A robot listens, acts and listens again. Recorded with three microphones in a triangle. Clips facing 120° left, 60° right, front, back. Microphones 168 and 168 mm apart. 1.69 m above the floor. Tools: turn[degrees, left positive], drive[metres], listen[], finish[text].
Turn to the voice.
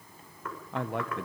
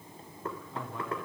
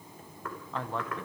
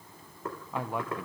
Thought: The man speaking: 100° left.
Action: turn[100]
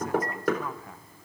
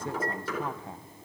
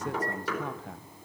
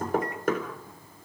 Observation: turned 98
Action: finish[Facing the man speaking.]